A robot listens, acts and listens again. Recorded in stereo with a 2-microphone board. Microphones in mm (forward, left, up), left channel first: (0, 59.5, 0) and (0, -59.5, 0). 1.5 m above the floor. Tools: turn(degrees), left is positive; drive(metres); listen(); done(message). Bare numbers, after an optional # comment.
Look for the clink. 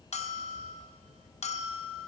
listen()
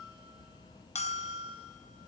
listen()
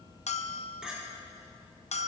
turn(-30)
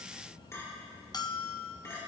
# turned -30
# So it is at 25° left.
turn(25)
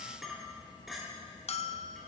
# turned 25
done("Found it: a clink, straight ahead, 2 to 4 m away.")